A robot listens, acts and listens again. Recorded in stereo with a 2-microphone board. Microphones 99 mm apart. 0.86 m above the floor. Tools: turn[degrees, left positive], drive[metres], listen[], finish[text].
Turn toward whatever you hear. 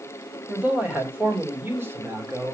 Thought: The man speaking: about 30° right or 150° right.
Action: turn[-30]
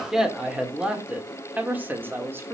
Thought: The man speaking: about 25° right or 155° right.
Action: turn[-25]
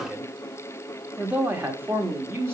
Thought: The man speaking: about 25° right or 155° right.
Action: turn[-25]
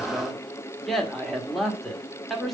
Action: finish[Facing the man speaking, 1 to 2 m away.]